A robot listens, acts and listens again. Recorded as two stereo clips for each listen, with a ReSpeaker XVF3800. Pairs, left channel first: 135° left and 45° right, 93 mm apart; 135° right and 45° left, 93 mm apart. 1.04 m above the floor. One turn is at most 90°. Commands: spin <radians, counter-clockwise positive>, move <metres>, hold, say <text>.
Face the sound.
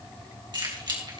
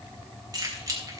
say Found it: keys jangling, straight ahead.